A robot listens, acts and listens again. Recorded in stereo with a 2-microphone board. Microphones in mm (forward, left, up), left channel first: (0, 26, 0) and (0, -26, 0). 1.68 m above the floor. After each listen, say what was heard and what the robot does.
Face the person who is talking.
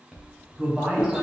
The man speaking: about 25° right or 155° right. Turn 25° right.
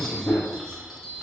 Keep listening.
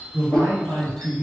So it is at 105° right. Turn 105° right.
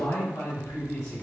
The man speaking is now 60° left. Turn 60° left.
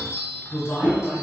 Found it: a man speaking, straight ahead.